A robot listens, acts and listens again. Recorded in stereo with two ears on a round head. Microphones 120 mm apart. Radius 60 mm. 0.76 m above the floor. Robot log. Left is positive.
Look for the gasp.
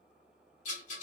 cmd idle
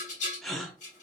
cmd yaw +30
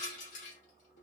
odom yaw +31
cmd idle
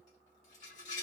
end: I heard a gasp, but can't make it out now. It was about 25° right or 145° left.